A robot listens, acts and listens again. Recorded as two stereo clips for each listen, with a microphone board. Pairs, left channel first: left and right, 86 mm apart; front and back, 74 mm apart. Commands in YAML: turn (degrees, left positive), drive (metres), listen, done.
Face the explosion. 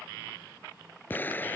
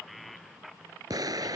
turn: 155
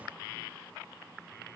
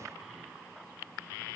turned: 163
turn: -10
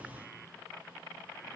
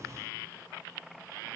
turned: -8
done: "Facing where the explosion came from. I can't hear it now."